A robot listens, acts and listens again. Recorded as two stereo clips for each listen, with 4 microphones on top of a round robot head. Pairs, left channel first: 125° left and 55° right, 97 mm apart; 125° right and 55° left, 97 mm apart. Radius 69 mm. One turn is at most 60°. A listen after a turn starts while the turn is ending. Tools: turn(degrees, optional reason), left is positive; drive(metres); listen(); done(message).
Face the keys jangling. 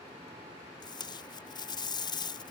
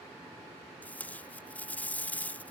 listen()
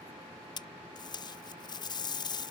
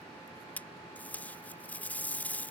listen()
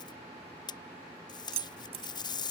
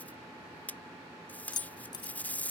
turn(degrees=-60, reason="The keys jangling: 75° right.")
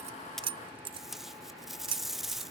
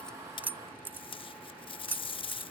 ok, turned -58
turn(degrees=-20, reason="The keys jangling is now 20° right.")
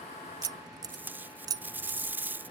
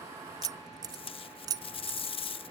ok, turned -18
done("Found it: keys jangling, straight ahead.")